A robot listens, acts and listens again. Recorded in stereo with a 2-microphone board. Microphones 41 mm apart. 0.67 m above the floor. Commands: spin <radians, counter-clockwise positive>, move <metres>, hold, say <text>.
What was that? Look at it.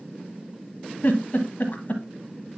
spin 0.87
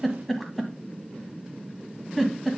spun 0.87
say Found it: a giggle, straight ahead.